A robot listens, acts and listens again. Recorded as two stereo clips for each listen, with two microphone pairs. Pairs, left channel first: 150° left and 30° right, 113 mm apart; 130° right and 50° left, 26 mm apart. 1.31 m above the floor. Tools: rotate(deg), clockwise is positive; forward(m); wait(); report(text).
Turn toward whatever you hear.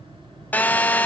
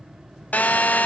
rotate(135)
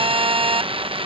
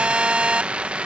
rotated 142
report("Facing the phone buzzing.")